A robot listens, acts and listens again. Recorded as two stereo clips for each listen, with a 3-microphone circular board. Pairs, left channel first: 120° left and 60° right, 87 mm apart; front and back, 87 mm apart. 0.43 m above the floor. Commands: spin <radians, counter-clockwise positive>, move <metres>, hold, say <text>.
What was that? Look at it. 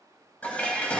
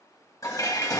spin 0.79
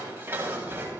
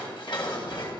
say Facing the dishes clattering, 1 to 2 m away.